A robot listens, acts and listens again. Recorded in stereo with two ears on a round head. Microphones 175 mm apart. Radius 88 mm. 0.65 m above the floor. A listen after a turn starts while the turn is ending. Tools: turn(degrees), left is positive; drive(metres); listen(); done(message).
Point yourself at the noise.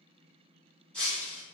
turn(degrees=30)
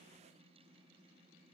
listen()
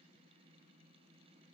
done("I heard breaking glass, but can't make it out now. It was about 25° right or 145° left.")